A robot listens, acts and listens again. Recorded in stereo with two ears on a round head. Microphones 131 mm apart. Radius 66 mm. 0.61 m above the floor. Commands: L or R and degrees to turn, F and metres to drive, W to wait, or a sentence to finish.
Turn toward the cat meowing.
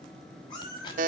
L30
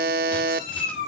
L125
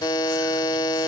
W
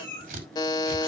L10
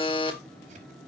W
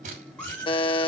L10
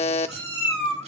Facing the cat meowing, over 4 m away.